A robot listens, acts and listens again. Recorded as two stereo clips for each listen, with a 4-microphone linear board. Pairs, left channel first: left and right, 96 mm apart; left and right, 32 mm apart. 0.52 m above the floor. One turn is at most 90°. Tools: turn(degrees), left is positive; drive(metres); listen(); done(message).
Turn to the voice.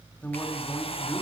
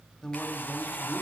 turn(degrees=20)
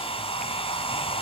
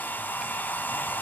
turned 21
listen()
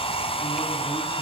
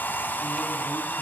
listen()
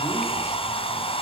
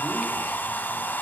done("I heard a man speaking, but can't make it out now. It was about straight ahead or 135° left.")